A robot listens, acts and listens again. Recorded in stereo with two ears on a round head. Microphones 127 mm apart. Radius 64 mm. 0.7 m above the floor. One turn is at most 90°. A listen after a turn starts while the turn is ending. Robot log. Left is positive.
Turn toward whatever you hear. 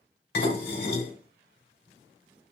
cmd yaw +90
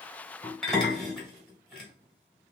end: Facing the dishes clattering.